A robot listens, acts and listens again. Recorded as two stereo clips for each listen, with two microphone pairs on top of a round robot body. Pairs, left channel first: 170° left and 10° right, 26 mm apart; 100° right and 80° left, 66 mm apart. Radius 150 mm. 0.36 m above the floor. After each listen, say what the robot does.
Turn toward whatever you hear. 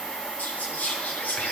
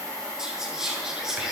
Turn 160° left.
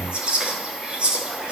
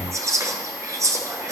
Turn 45° left.
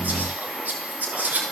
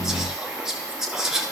Found it: whispering, straight ahead.